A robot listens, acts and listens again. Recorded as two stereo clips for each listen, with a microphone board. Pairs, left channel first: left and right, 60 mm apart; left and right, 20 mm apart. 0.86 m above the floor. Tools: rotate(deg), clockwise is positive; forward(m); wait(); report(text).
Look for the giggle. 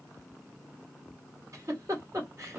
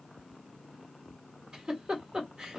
rotate(60)
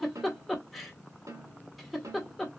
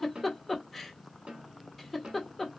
report("Found it: a giggle, straight ahead, 1 to 2 m away.")